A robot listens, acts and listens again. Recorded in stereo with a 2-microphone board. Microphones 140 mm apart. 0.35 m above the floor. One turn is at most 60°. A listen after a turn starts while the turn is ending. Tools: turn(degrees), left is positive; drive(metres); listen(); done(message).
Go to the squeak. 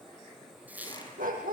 turn(degrees=-30)
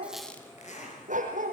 listen()
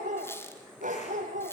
turn(degrees=20)
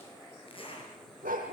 listen()
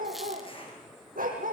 listen()
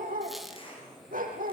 done("Facing where the squeak came from. I can't hear it now. I did not reach it.")